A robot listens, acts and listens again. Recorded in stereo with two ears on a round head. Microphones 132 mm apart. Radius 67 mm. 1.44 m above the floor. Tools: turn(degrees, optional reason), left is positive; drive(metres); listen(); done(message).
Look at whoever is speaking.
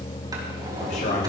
turn(degrees=60, reason="The man speaking: about 60° left or 120° left.")
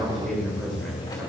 done("Facing the man speaking.")